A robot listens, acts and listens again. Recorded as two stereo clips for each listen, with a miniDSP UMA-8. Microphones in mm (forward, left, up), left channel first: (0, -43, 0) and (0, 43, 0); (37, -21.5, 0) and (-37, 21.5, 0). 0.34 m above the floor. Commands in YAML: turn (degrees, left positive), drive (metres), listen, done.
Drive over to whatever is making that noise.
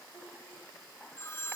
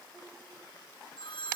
turn: -30
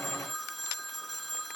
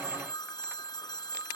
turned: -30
drive: 1.0
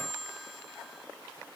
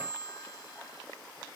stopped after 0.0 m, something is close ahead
done: "Something is in my way. I am facing the phone ringing but have not reached it."